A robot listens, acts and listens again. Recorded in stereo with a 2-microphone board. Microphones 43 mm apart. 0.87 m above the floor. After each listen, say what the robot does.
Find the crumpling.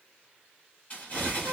Turn 35° left.
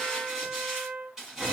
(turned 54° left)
Turn 15° right.
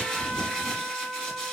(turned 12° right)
Facing the crumpling.